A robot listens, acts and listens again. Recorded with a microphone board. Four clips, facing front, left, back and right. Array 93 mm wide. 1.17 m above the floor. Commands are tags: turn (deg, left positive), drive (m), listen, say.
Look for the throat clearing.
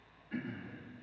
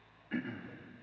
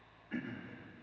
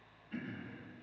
<turn deg="105"/>
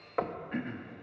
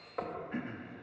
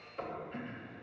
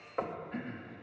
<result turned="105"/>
<turn deg="20"/>
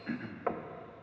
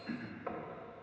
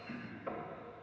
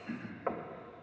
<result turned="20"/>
<say>Facing the throat clearing, 1 to 2 m away.</say>